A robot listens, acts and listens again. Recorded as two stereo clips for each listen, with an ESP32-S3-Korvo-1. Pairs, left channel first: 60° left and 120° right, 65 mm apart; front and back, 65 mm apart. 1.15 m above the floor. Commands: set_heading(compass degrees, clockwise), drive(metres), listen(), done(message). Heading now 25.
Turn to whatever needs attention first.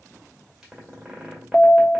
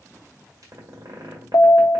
set_heading(35)
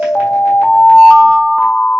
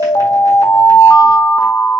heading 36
done("Found it: an alarm, straight ahead.")